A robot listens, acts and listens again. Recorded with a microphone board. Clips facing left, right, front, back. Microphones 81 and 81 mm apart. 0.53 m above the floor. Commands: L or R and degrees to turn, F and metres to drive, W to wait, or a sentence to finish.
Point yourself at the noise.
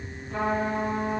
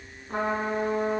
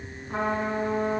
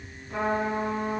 R50
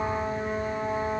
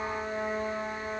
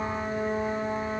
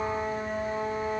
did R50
L20
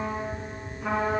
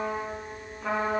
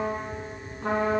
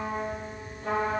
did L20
Facing the trumpet, 1 to 2 m away.